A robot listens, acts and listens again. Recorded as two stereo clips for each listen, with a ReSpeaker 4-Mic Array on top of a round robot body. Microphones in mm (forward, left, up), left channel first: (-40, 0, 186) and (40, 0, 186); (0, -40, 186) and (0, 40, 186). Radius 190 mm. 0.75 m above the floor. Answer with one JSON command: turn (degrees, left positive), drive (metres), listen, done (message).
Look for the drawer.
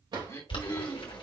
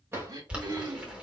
{"turn": 30}
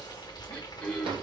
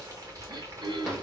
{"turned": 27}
{"done": "Facing the drawer, 2 to 4 m away."}